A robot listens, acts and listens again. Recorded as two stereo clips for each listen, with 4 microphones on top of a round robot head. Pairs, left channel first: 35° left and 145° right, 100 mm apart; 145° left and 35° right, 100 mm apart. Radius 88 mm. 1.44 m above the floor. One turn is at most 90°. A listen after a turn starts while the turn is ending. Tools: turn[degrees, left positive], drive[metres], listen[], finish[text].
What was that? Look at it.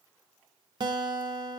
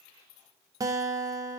Thought: The guitar: 95° right.
Action: turn[-90]
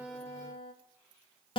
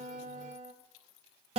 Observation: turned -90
Action: finish[Facing the guitar, 1 to 2 m away.]